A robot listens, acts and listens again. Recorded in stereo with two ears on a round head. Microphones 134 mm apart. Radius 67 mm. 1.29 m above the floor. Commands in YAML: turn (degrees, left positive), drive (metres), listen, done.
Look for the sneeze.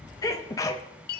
turn: 20
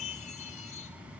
listen: true
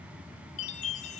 done: "I heard a sneeze, but can't make it out now. It was about straight ahead or 140° left."